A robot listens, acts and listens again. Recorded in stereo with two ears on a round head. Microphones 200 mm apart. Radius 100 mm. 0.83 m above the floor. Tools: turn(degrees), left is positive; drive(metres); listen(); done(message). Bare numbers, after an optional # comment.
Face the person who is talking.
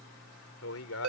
turn(90)
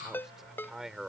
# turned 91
done("Facing the man speaking.")